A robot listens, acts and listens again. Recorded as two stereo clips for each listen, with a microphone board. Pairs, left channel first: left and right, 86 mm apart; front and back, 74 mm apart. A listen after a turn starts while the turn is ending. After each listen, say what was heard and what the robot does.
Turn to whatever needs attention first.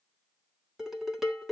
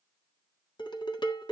Keep listening.
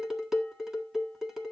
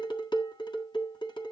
Keep listening.
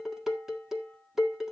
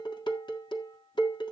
I can't make out anything urgent, only dishes clattering.